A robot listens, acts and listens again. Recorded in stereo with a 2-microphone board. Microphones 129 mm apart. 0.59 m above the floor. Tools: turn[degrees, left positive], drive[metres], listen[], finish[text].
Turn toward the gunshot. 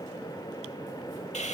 Action: listen[]
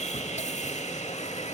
Action: listen[]
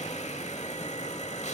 Action: finish[I can't make out a gunshot, only sawing.]